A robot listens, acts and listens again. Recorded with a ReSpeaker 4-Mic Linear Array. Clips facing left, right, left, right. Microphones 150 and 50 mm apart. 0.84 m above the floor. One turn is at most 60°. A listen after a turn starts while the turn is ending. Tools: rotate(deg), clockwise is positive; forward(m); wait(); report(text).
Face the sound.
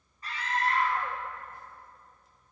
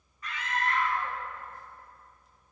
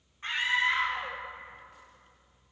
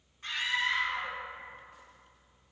rotate(-35)
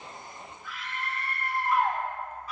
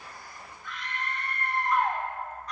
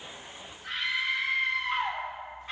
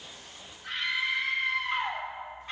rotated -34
report("Found it: a scream, straight ahead.")